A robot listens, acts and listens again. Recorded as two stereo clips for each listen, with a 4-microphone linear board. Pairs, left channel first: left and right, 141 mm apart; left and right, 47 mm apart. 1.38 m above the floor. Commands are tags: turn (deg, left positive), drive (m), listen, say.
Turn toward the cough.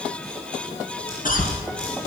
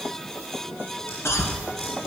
<turn deg="70"/>
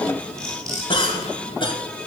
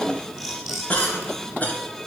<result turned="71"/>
<turn deg="35"/>
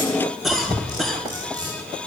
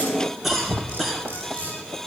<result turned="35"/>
<say>Found it: a cough, straight ahead.</say>